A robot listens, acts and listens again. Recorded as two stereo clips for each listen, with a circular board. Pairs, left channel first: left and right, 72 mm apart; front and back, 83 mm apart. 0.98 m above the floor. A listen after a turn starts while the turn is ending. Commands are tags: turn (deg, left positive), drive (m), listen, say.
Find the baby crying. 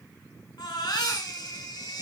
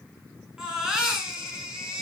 <turn deg="100"/>
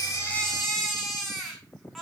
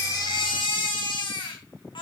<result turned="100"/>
<say>Facing the baby crying, over 4 m away.</say>